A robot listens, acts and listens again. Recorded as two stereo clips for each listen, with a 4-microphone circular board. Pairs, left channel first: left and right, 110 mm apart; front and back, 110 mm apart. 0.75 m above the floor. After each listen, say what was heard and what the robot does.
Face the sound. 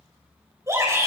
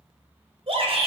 The shout: 155° right. Turn 155° right.
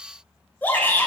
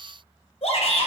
The shout is now 15° left. Turn 15° left.
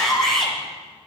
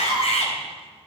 Found it: a shout, straight ahead.